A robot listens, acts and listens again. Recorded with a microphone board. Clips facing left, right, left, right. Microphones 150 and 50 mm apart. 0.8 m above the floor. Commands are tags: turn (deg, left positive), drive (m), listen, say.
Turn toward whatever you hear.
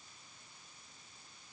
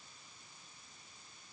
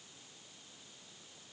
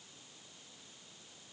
<listen/>
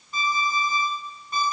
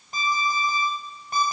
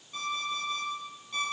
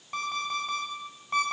<turn deg="-90"/>
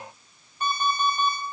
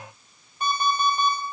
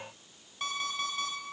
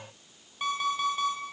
<turn deg="-15"/>
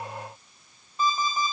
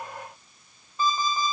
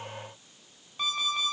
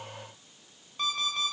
<say>Facing the alarm clock, 1 to 2 m away.</say>